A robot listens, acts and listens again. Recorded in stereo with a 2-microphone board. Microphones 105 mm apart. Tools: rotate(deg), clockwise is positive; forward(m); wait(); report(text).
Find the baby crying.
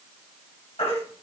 rotate(-90)
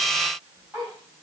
wait()
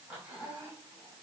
wait()
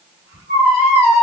rotate(10)
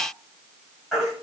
report("Found it: a baby crying, straight ahead.")